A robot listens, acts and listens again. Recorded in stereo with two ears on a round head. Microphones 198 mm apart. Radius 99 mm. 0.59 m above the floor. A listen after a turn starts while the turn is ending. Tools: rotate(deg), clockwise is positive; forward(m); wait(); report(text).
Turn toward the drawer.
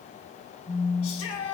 wait()
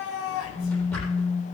rotate(-30)
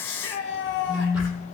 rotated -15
wait()
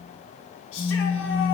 wait()
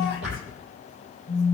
report("Found it: a drawer, straight ahead, over 4 m away.")